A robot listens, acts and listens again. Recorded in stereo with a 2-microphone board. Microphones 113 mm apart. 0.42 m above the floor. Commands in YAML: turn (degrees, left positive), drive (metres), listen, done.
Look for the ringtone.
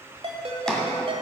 turn: -55
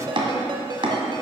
turn: -55
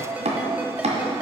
turn: -15
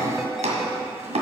listen: true
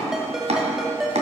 done: "Facing the ringtone, 1 to 2 m away."